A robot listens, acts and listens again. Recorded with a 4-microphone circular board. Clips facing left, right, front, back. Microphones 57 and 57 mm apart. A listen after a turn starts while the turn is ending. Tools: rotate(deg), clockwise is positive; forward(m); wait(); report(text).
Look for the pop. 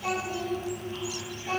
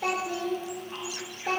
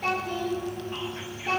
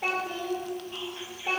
wait()
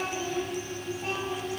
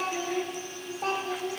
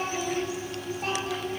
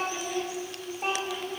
wait()
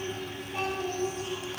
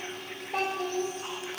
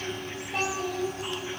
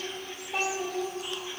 report("I can't make out a pop, only a child speaking.")